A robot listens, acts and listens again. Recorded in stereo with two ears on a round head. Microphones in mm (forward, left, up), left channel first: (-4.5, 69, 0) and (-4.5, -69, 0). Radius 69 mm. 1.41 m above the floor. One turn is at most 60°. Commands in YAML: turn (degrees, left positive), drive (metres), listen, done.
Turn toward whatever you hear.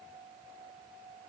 listen: true
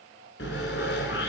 turn: 60
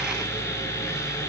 turn: 15
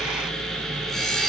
done: "Facing the sawing, over 4 m away."